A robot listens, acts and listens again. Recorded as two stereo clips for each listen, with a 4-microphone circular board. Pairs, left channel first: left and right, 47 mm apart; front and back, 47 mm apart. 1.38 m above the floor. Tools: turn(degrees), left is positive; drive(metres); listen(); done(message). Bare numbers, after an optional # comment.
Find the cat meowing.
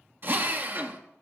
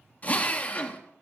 listen()
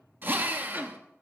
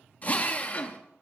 listen()
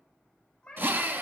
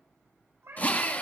# The cat meowing: 160° left.
turn(160)
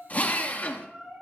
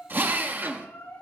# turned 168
# The cat meowing is now 10° right.
turn(-10)
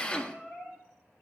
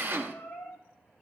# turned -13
done("Facing the cat meowing, over 4 m away.")